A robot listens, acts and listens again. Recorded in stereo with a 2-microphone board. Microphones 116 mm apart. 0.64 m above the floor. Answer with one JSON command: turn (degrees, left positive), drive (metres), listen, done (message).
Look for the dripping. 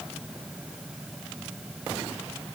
{"listen": true}
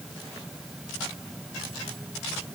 {"listen": true}
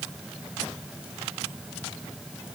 {"done": "I can't make out dripping to turn to."}